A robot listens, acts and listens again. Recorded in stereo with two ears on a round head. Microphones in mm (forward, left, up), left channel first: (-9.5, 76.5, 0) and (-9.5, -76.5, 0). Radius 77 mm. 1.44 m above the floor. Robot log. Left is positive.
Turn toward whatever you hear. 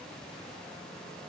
cmd idle
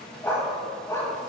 note: The dog barking: about 20° left or 160° left.
cmd yaw +20
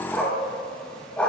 cmd yaw +30
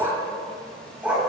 note: So it is at 10° right.
cmd yaw -10
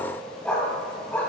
note: The dog barking is now 10° left.
cmd yaw +10
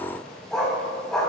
end: Found it: a dog barking, straight ahead, 2 to 4 m away.